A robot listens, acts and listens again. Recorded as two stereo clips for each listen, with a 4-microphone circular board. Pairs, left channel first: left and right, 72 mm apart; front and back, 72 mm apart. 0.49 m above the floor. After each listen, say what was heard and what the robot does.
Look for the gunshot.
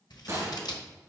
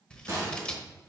The gunshot: 135° right. Turn 135° right.
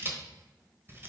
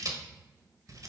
I heard a gunshot from this way, but can't make it out now.